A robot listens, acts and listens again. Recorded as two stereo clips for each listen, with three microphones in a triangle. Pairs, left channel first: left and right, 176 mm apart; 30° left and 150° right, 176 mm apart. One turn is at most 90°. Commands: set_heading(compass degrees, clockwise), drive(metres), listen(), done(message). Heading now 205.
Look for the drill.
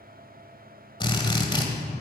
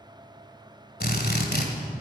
set_heading(175)
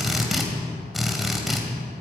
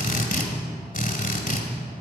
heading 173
done("Facing the drill.")